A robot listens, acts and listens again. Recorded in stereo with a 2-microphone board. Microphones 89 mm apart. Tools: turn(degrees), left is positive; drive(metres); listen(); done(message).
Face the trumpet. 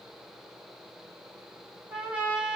turn(degrees=-20)
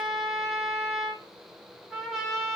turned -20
done("Facing the trumpet, under 1 m away.")